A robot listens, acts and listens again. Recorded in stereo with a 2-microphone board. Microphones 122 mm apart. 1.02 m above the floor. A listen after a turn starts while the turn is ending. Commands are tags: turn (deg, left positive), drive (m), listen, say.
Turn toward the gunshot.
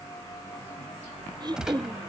<turn deg="-30"/>
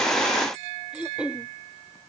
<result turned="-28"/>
<listen/>
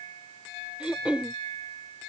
<say>I heard a gunshot, but can't make it out now. It was about 20° left or 145° right.</say>